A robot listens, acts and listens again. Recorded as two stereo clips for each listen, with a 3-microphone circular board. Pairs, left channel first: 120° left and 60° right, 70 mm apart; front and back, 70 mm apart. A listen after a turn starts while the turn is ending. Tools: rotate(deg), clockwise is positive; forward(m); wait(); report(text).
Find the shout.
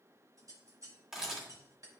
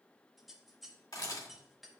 wait()
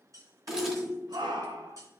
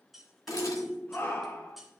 rotate(60)
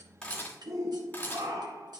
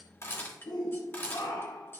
rotate(20)
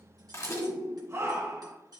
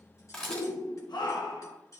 report("Found it: a shout, straight ahead.")